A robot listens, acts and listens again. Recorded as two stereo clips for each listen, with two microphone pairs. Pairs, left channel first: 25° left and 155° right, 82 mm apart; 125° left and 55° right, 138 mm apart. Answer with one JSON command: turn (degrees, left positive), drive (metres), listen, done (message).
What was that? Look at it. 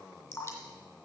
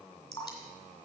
{"turn": 70}
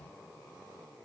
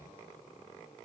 {"listen": true}
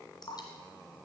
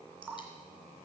{"turn": 25}
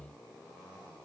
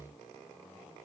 {"listen": true}
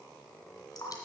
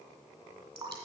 {"done": "Facing the dripping, 2 to 4 m away."}